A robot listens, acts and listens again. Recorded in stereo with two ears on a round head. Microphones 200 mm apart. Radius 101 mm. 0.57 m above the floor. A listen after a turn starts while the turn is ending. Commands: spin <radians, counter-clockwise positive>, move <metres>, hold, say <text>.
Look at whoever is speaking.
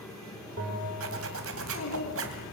spin 1.22
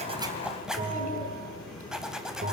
hold
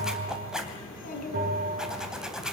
spin 0.70
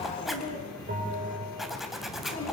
spin 0.61
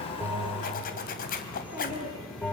say Found it: a child speaking, straight ahead, over 4 m away.